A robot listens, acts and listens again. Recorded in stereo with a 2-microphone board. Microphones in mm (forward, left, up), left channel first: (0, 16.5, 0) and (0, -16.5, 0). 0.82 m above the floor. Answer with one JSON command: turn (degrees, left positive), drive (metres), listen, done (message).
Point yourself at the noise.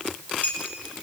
{"turn": 55}
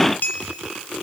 {"turn": 70}
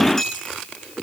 {"turn": 10}
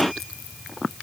{"listen": true}
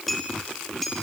{"done": "Facing the clink."}